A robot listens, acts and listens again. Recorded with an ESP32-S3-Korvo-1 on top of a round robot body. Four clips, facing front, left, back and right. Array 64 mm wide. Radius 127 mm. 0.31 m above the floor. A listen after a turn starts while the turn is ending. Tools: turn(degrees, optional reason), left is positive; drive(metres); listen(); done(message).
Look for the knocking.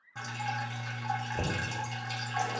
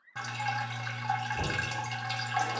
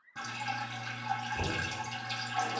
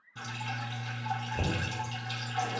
turn(degrees=-20, reason="The knocking: 20° right.")
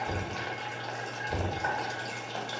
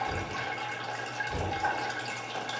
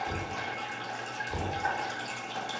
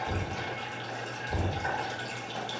done("Facing the knocking, 1 to 2 m away.")